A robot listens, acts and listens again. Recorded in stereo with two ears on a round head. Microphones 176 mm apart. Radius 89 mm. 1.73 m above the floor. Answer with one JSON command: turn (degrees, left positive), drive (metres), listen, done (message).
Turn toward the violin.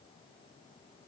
{"listen": true}
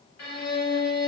{"turn": 90}
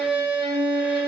{"turn": -10}
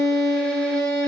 {"done": "Facing the violin."}